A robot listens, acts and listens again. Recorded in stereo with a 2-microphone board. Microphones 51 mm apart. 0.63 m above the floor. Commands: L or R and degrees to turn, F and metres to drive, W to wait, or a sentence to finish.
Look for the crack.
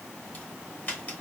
L35
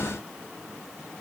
W
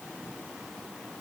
I heard a crack, but can't make it out now. It was about straight ahead or 110° left.